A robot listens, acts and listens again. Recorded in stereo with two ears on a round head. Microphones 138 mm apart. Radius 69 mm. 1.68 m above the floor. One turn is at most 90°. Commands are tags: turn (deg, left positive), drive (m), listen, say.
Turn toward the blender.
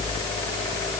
<listen/>
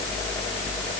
<listen/>
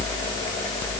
<say>I can't make out a blender.</say>